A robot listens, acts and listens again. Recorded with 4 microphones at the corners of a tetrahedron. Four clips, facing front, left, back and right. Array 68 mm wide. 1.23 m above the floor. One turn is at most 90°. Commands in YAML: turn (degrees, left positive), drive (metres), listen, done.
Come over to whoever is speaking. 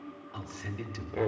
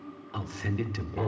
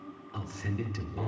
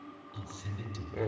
turn: 90
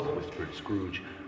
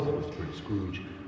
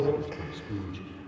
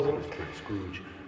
turn: -15
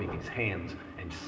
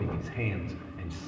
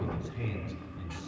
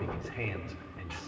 drive: 1.0
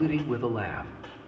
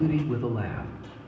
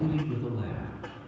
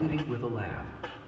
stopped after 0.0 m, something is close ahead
done: "Something is in my way. I am facing the man speaking but have not reached it."